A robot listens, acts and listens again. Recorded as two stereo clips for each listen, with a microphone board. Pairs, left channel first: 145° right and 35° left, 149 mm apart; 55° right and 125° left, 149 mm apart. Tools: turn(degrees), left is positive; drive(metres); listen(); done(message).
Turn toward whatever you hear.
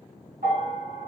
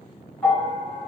turn(degrees=25)
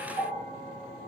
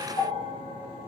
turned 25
done("Found it: a bell, straight ahead.")